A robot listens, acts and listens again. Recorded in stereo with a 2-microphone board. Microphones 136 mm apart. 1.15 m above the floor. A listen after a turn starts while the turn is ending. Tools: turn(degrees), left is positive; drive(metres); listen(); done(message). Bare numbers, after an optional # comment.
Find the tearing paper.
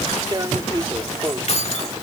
# The tearing paper: about 35° right or 145° right.
turn(-35)
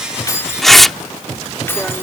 done("Found it: tearing paper, straight ahead.")